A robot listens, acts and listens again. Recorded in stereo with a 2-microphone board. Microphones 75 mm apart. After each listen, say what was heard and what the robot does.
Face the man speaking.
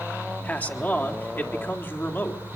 The man speaking: about 30° left or 150° left. Turn 30° left.
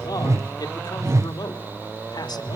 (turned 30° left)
So it is at 105° left. Turn 105° left.
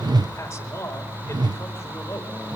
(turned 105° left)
The man speaking is now 40° left. Turn 40° left.
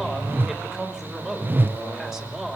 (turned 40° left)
Found it: a man speaking, straight ahead, over 4 m away.